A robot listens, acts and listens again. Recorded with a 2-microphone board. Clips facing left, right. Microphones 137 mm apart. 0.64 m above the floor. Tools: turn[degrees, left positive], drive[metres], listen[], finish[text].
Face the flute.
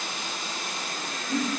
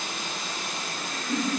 Action: listen[]
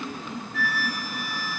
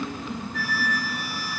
Thought: The flute: about 40° right or 140° right.
Action: turn[-40]
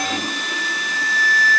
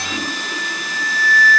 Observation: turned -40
Thought: So it is at 90° right.
Action: turn[-90]
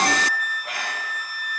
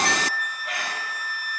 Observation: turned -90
Thought: The flute is now 15° left.
Action: turn[15]
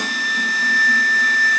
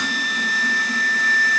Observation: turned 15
Action: finish[Facing the flute, 2 to 4 m away.]